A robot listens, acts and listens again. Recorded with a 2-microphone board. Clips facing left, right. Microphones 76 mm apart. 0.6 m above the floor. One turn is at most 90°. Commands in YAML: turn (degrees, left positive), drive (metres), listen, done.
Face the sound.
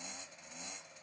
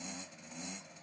listen: true
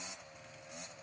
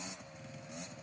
listen: true
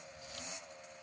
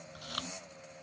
turn: -70
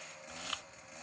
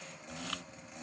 done: "Found it: chewing, straight ahead."